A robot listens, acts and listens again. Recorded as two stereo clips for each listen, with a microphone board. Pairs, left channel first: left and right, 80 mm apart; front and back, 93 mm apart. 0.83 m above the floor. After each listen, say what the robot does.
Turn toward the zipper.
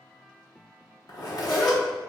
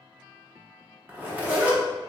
Turn 110° left.
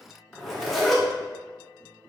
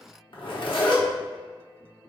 Facing the zipper, under 1 m away.